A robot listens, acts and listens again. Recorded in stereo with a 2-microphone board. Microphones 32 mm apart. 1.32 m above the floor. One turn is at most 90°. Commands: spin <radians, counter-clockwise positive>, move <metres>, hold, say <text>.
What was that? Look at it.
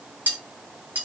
spin -1.22
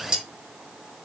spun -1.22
spin -0.44
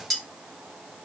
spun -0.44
say Found it: cutlery clinking, straight ahead, 1 to 2 m away.